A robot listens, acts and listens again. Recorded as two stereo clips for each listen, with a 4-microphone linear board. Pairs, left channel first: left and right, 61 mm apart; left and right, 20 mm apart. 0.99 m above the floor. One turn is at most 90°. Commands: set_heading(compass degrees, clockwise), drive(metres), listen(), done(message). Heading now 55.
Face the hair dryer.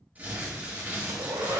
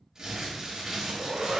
set_heading(145)
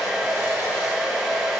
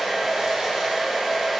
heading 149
set_heading(159)
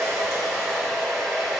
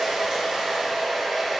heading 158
done("Facing the hair dryer.")